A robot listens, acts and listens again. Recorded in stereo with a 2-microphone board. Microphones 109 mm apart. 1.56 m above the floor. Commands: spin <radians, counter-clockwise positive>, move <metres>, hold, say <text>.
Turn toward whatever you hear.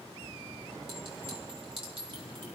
spin -1.05
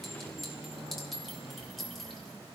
say Found it: a clink, straight ahead, 2 to 4 m away.